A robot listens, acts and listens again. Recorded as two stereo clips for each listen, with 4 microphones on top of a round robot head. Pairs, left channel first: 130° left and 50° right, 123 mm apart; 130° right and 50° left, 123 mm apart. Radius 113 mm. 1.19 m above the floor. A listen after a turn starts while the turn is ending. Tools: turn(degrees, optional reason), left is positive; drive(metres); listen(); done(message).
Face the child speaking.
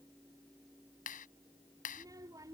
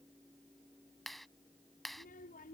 turn(degrees=-115, reason="The child speaking: 115° right.")
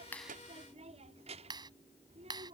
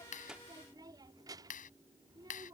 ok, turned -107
turn(degrees=-10, reason="The child speaking is now 10° right.")
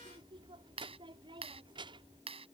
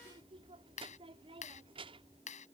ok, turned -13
done("Facing the child speaking.")